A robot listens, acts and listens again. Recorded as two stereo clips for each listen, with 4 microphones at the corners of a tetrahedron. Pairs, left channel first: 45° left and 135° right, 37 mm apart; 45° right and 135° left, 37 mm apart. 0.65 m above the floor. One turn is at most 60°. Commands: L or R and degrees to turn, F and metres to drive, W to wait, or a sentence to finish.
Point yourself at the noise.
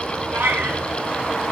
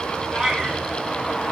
R60
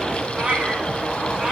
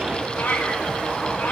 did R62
R60
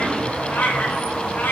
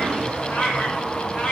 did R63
L10
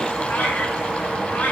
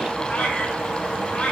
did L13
Found it: a cat meowing, straight ahead.